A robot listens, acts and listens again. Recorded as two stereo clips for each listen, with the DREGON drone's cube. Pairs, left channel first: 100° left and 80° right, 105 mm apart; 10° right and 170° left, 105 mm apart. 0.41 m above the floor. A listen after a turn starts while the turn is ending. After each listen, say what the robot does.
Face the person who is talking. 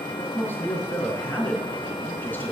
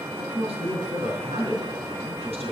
Turn 170° left.
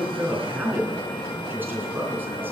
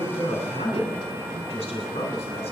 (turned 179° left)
Turn 10° right.
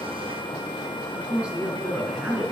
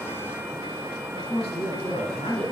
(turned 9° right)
Found it: a man speaking, straight ahead, 2 to 4 m away.